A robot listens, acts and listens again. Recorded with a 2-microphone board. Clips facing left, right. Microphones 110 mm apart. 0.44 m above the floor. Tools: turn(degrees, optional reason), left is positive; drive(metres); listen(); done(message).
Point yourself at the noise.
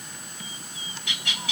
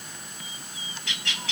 turn(degrees=30)
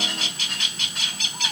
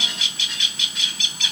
turn(degrees=135, reason="So it is at 135° left.")
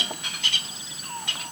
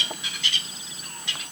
turn(degrees=55, reason="The bird is now 55° left.")
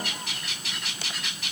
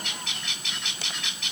done("Found it: a bird, straight ahead, 1 to 2 m away.")